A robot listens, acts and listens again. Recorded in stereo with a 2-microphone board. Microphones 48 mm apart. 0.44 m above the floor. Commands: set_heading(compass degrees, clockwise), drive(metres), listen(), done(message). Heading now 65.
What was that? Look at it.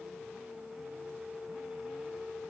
listen()
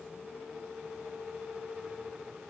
listen()
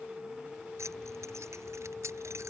set_heading(155)
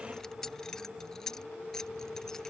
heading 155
set_heading(145)
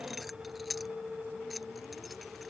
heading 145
done("Found it: keys jangling, straight ahead.")